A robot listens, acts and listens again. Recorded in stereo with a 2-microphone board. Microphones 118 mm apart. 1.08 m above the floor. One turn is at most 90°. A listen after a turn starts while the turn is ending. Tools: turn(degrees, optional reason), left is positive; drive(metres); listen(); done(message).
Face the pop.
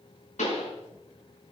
turn(degrees=90)
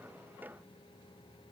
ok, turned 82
turn(degrees=10, reason="Nothing new. It was at 10° left.")
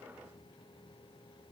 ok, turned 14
done("I heard a pop from this way, but can't make it out now.")